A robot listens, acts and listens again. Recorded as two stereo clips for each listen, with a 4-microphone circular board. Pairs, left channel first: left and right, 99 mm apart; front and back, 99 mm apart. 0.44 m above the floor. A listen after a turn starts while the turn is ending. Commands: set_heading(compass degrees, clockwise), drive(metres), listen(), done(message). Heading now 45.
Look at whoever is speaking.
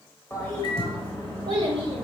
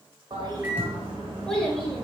set_heading(130)
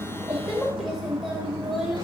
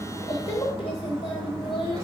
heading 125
done("Found it: a child speaking, straight ahead, under 1 m away.")